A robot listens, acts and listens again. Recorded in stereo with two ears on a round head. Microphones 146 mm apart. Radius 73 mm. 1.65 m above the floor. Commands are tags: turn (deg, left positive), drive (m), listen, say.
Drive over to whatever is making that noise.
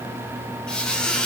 <turn deg="30"/>
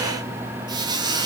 <turn deg="-25"/>
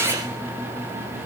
<listen/>
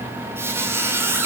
<turn deg="-15"/>
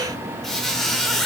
<drive m="1.0"/>
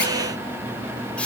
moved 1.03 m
<listen/>
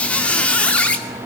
<turn deg="10"/>
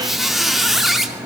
<drive m="1.0"/>
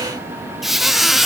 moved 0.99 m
<drive m="1.0"/>
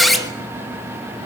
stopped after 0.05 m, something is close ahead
<say>Arrived at the squeak, straight ahead.</say>